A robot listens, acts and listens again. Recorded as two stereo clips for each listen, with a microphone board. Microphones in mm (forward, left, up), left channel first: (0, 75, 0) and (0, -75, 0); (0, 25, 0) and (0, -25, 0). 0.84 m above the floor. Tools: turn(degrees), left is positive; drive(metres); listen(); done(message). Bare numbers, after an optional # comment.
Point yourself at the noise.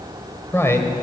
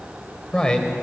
# The man speaking: about 20° left or 160° left.
turn(20)
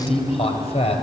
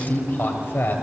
# So it is at 135° left.
turn(135)
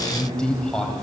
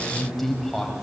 done("Found it: a man speaking, straight ahead.")